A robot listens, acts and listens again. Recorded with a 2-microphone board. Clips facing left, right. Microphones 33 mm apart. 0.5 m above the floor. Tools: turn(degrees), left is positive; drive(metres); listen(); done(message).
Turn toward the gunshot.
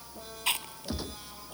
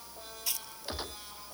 turn(degrees=-25)
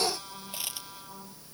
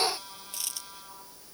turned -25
listen()
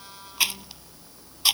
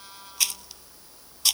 done("I heard a gunshot, but can't make it out now. It was about straight ahead or 130° right.")